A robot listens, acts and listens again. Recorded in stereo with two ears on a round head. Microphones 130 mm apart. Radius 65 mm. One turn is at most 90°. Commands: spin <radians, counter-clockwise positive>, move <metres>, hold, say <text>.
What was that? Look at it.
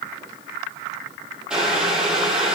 spin -0.52
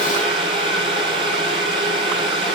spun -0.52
spin -1.57
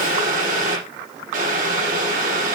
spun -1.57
spin -1.05
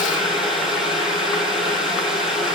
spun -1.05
say Found it: boiling, straight ahead, over 4 m away.